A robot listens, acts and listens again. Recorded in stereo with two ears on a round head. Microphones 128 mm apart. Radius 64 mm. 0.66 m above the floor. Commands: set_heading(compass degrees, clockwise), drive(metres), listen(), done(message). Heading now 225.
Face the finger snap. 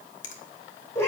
set_heading(170)
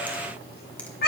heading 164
listen()
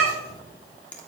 set_heading(154)
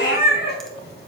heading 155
listen()
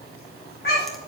listen()
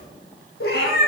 done("I heard a finger snap from this way, but can't make it out now.")